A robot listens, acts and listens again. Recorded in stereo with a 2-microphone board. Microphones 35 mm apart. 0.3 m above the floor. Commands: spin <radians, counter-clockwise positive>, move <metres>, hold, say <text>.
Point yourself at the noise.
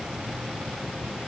hold
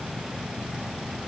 hold
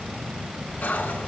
spin 1.05
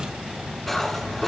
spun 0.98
spin 0.17
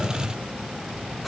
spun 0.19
say Found it: cutlery clinking, straight ahead, 1 to 2 m away.